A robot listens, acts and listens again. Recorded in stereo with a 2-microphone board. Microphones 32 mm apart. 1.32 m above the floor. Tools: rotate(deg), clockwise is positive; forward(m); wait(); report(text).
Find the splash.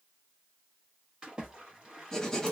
rotate(25)
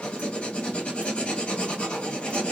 wait()
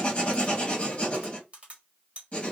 report("I heard a splash, but can't make it out now. It was about straight ahead or 130° right.")